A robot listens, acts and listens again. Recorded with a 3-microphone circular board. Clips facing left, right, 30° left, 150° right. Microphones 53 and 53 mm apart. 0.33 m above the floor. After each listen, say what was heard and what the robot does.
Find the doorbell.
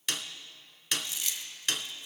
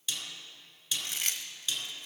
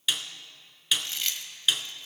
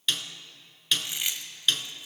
Keep listening.
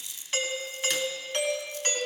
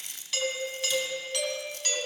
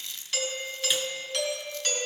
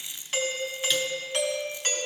The doorbell: 150° left. Turn 150° left.
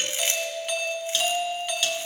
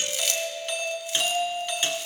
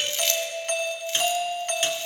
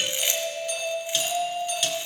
The doorbell is now 10° left. Turn 10° left.
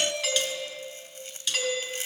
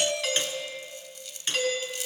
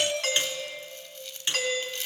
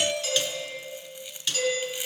Facing the doorbell.